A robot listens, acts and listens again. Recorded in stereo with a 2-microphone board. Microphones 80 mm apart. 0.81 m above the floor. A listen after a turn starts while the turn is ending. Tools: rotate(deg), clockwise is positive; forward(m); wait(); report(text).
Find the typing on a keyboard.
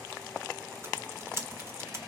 rotate(35)
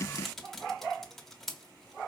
report("Facing the typing on a keyboard, 1 to 2 m away.")